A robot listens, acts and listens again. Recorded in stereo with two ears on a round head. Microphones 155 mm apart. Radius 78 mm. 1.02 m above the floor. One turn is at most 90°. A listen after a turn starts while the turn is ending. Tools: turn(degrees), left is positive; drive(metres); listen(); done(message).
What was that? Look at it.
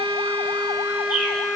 listen()
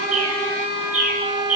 turn(degrees=-45)
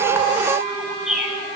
done("Facing the bird, over 4 m away.")